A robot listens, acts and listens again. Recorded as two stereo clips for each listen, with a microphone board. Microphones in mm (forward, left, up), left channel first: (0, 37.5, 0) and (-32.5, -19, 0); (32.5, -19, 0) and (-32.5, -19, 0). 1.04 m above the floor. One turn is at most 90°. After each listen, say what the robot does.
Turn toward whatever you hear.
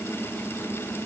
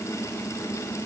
Keep listening.
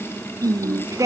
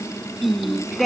Turn 90° right.
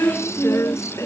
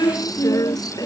Turn 20° left.
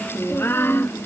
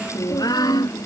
Found it: singing, straight ahead.